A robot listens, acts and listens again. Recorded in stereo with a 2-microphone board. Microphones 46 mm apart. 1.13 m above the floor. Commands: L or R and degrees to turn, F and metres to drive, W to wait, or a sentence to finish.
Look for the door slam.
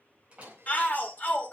R30
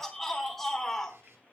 W
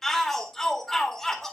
I heard a door slam, but can't make it out now. It was about straight ahead or 120° right.